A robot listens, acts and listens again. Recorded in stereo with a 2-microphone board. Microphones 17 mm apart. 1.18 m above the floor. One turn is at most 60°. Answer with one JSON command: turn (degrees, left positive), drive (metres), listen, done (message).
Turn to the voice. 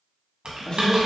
{"turn": 60}
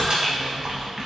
{"listen": true}
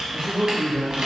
{"turn": 45}
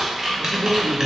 {"turn": 25}
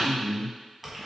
{"turn": 10}
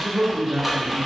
{"done": "Facing the man speaking."}